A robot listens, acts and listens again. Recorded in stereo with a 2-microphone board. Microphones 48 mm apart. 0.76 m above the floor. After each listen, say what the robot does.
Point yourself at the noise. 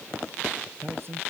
Turn 50° right.
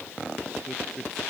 Found it: a man speaking, straight ahead.